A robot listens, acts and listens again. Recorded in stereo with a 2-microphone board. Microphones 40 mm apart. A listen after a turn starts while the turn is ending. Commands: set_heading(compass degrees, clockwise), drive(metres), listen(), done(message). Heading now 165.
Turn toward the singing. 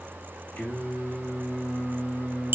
set_heading(120)
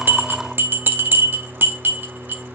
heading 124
done("Facing the singing, over 4 m away.")